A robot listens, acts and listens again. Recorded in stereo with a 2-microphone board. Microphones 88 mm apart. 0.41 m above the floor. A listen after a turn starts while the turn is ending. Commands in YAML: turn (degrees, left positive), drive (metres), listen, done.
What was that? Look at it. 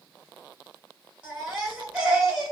turn: -30
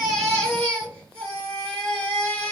turn: 20
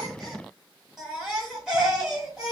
done: "Found it: a baby crying, straight ahead."